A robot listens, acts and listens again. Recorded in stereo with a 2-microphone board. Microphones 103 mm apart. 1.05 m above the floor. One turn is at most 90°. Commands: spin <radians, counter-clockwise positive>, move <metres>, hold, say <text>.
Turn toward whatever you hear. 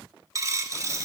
spin -0.61
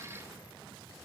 hold
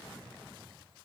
say I heard a dropped coin, but can't make it out now. It was about straight ahead or 110° right.